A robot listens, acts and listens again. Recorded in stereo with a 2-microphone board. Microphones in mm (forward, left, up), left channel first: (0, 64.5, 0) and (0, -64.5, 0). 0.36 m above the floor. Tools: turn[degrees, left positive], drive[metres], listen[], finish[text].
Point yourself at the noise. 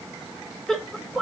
Action: turn[30]
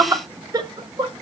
Thought: So it is at 35° right.
Action: turn[-35]
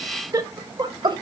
Thought: The laughter is now 40° right.
Action: turn[-40]
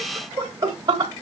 Thought: The laughter is now 35° right.
Action: turn[-35]
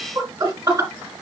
Thought: The laughter is now 20° right.
Action: turn[-20]
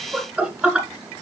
Action: finish[Facing the laughter, 1 to 2 m away.]